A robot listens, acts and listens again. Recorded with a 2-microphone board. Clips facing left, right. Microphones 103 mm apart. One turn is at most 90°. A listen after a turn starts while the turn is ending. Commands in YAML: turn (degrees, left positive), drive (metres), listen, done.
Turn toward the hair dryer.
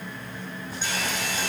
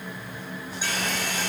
turn: -70
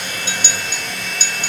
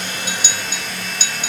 done: "Facing the hair dryer."